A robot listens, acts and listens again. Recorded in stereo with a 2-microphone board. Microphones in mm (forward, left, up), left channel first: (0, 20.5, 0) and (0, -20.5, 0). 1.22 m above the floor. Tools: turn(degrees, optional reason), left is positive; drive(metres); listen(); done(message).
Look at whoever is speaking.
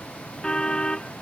listen()
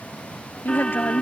turn(degrees=60, reason="The woman speaking: about 60° left or 120° left.")
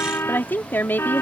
turn(degrees=60, reason="So it is at 60° left.")
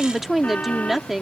done("Found it: a woman speaking, straight ahead.")